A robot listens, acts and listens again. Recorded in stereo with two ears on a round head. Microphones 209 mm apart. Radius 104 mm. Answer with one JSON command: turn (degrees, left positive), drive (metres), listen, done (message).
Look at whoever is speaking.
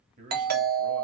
{"turn": -35}
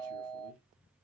{"listen": true}
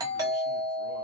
{"listen": true}
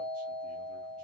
{"done": "I heard a man speaking, but can't make it out now. It was about straight ahead or 110° right."}